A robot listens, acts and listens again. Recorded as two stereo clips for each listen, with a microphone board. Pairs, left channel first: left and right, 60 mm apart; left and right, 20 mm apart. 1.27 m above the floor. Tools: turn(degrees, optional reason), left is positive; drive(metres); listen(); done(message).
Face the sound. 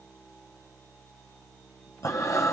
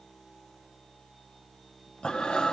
turn(degrees=60, reason="The breathing: about 60° left or 120° left.")
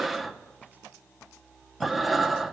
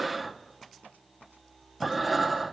done("Found it: breathing, straight ahead, under 1 m away.")